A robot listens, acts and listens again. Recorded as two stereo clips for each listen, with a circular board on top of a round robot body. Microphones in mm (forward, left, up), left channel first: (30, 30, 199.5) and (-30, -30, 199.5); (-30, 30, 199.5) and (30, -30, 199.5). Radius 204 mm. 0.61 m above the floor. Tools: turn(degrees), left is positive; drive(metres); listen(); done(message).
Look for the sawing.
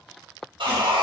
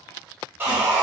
turn(degrees=-110)
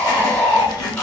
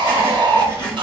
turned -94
turn(degrees=-15)
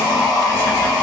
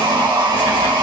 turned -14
done("Found it: sawing, straight ahead, 1 to 2 m away.")